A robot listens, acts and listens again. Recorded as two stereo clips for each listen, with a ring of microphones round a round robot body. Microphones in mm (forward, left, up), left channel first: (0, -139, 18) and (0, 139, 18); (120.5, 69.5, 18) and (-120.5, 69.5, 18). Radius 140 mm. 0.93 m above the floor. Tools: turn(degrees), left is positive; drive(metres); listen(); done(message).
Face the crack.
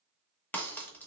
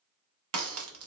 turn(degrees=-175)
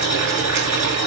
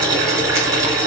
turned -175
done("I heard a crack from this way, but can't make it out now.")